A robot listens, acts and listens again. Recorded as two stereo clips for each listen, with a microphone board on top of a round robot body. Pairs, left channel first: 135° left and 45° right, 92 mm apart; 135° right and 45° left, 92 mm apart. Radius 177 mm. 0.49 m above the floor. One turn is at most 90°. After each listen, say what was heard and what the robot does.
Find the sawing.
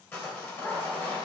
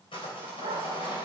The sawing: 160° right. Turn 90° right.
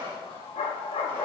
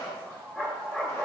The sawing is now 75° right. Turn 75° right.
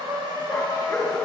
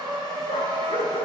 Found it: sawing, straight ahead, 2 to 4 m away.